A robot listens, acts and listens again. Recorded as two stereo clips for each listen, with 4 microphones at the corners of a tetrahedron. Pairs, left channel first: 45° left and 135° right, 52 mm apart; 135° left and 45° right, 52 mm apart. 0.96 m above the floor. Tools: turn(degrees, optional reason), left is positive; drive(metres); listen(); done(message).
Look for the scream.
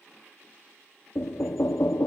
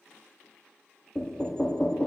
listen()
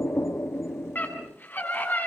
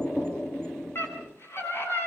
turn(degrees=95, reason="The scream: 95° left.")
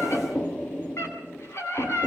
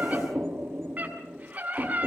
turn(degrees=15, reason="The scream is now 15° left.")
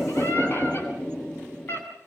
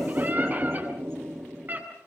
done("Facing the scream, over 4 m away.")